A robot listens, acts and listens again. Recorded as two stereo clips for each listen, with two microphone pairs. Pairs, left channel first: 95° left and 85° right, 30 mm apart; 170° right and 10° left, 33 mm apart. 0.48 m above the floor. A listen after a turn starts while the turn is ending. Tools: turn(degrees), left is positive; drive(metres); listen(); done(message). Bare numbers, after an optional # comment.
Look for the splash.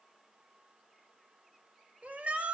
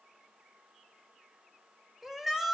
listen()
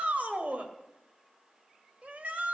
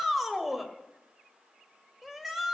listen()
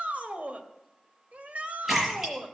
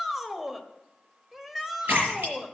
# The splash: 10° right.
turn(-10)
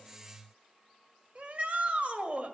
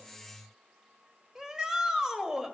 done("I heard a splash from this way, but can't make it out now.")